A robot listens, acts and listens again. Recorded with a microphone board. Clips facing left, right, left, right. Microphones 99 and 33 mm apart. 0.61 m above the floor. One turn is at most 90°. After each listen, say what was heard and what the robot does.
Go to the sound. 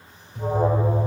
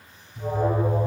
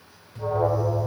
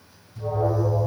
The alarm: about 65° left or 115° left. Turn 65° left.
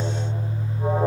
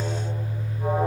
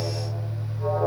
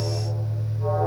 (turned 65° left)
So it is at 20° left. Turn 20° left.
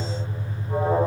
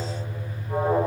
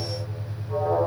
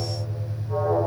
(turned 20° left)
Drive 1.0 m forward.
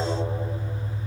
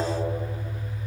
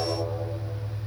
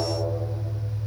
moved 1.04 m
Drive 1.0 m forward.
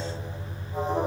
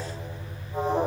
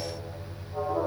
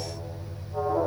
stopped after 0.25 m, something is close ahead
The alarm is now 10° right. Turn 10° right.
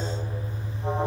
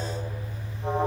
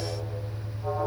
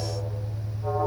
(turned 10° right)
I am next to the alarm.